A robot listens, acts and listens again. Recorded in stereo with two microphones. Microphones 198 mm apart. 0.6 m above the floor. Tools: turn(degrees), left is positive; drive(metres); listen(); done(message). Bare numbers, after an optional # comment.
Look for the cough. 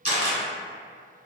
listen()
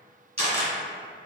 listen()
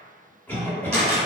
turn(30)
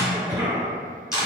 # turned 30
# So it is at 20° right.
turn(-20)
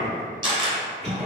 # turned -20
done("Facing the cough, 1 to 2 m away.")